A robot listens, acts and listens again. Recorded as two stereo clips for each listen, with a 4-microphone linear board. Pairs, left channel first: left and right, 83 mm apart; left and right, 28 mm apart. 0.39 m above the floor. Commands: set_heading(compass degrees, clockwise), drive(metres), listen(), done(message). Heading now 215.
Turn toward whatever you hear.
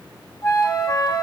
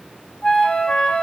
set_heading(165)
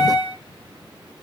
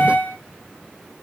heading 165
set_heading(85)
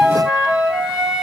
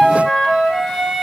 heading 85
set_heading(95)
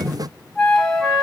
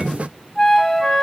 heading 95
done("Found it: a flute, straight ahead.")